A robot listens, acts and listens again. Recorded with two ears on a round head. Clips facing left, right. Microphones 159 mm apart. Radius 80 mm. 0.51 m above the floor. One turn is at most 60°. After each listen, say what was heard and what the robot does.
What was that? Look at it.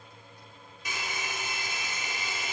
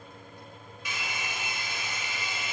The hair dryer: about 40° left or 140° left. Turn 40° left.
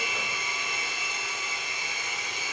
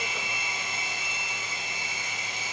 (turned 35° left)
So it is at 105° left. Turn 60° left.
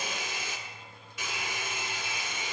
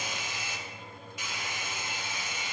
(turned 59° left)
The hair dryer is now 45° left. Turn 45° left.
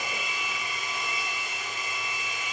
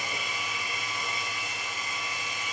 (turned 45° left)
Found it: a hair dryer, straight ahead, 1 to 2 m away.